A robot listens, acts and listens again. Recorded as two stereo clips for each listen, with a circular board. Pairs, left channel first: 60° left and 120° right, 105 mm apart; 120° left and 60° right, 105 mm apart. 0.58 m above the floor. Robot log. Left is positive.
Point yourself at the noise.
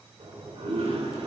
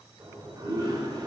note: The toilet flushing: 110° right.
cmd yaw -110
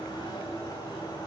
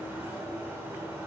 note: The toilet flushing is now 10° left.
cmd yaw +10
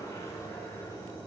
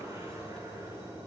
end: Found it: a toilet flushing, straight ahead.